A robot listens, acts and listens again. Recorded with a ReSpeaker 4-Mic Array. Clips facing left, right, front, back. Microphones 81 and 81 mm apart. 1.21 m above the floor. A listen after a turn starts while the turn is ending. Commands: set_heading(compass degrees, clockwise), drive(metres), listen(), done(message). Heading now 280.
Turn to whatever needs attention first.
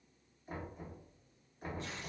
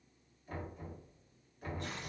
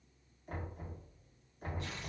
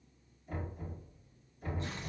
listen()
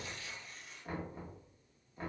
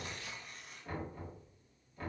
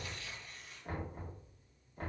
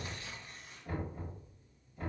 listen()
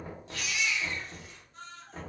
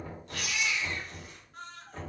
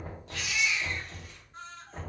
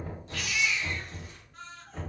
set_heading(345)
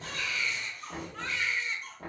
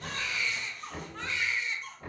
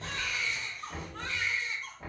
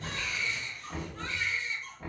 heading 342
done("Facing the baby crying, under 1 m away.")